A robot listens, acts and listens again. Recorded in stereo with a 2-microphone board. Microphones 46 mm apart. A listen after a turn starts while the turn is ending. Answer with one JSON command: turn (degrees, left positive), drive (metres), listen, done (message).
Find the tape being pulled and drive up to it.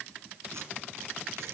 {"listen": true}
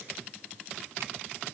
{"listen": true}
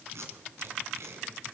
{"turn": -70}
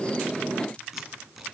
{"listen": true}
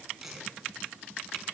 {"turn": -10}
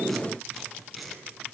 {"drive": 1.0}
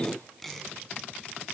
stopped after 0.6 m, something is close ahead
{"done": "Something is in my way. I am facing the tape being pulled but have not reached it."}